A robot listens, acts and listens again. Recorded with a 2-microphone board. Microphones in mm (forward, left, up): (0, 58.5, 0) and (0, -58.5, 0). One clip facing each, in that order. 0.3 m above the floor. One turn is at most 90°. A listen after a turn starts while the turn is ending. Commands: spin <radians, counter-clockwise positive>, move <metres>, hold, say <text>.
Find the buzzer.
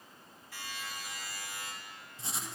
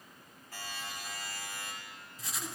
spin -0.96
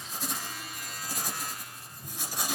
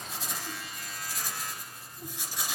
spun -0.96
say Found it: a buzzer, straight ahead, over 4 m away.